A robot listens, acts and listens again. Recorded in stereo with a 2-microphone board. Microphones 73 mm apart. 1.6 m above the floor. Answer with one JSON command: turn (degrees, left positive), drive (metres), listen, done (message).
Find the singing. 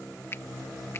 {"listen": true}
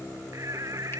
{"turn": -50}
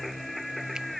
{"done": "Found it: singing, straight ahead."}